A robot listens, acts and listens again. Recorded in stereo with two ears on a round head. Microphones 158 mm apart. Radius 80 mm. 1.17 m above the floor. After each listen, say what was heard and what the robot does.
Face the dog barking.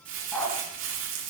Turn 30° left.
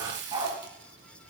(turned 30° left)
So it is at 25° right. Turn 25° right.
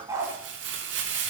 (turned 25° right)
The dog barking is now 20° right. Turn 20° right.
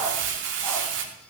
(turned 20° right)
Keep listening.
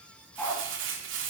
The dog barking is now 10° left. Turn 10° left.
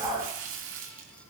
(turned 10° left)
Facing the dog barking, 2 to 4 m away.